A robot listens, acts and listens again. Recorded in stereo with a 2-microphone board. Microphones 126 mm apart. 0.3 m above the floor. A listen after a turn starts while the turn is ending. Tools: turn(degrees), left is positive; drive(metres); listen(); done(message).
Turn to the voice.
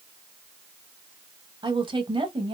turn(degrees=-45)
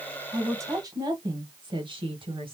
turn(degrees=-45)
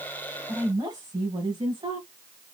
turn(degrees=-40)
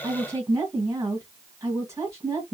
turn(degrees=-25)
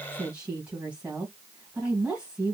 turn(degrees=-10)
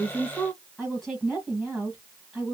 done("Found it: a woman speaking, straight ahead.")